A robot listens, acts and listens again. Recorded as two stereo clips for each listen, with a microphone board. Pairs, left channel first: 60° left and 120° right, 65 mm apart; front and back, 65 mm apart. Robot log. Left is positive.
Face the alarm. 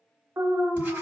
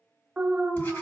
note: The alarm: 105° right.
cmd yaw -105
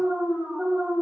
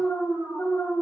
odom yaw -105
note: The alarm is now 45° right.
cmd yaw -45
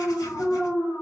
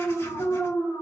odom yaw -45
end: Found it: an alarm, straight ahead, under 1 m away.